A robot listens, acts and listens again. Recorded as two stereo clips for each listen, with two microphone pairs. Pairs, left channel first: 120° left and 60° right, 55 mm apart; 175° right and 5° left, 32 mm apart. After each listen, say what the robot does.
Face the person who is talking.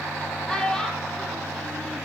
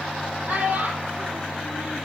Turn 45° left.
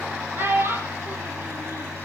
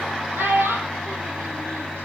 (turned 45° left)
Facing the child speaking, over 4 m away.